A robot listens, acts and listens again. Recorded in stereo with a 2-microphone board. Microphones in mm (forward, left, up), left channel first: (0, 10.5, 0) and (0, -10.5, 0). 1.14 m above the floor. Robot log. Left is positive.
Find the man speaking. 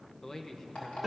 note: The man speaking: about 30° left or 150° left.
cmd yaw +30
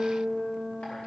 cmd idle
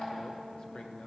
cmd idle
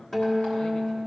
end: I heard a man speaking, but can't make it out now. It was about straight ahead or 120° left.